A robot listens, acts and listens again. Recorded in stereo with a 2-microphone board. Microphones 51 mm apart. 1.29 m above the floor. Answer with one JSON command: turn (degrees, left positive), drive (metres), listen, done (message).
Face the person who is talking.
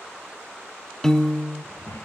{"turn": 70}
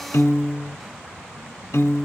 {"listen": true}
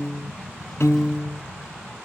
{"done": "Facing the child speaking."}